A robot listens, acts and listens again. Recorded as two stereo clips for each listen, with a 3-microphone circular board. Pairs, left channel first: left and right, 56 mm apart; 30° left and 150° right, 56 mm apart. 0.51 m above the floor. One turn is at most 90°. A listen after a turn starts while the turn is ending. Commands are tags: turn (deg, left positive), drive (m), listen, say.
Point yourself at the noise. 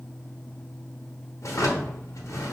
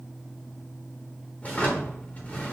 <turn deg="85"/>
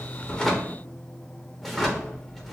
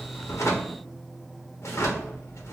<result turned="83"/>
<say>Facing the drawer, under 1 m away.</say>